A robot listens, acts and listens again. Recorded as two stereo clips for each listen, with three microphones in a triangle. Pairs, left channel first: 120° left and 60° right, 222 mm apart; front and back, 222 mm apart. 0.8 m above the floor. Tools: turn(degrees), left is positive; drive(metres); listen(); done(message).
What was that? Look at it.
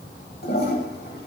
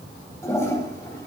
turn(degrees=80)
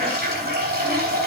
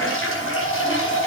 turn(degrees=-15)
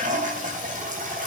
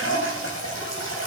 done("Found it: a toilet flushing, straight ahead, 2 to 4 m away.")